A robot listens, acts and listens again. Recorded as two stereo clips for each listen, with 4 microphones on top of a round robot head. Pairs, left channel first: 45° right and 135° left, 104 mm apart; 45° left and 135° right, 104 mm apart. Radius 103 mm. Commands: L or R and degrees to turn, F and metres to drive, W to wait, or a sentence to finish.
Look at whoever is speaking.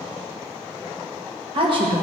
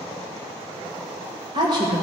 L175
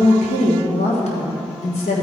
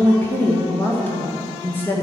R25
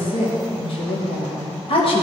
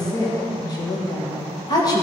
R10
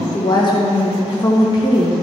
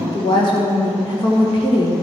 Found it: a woman speaking, straight ahead.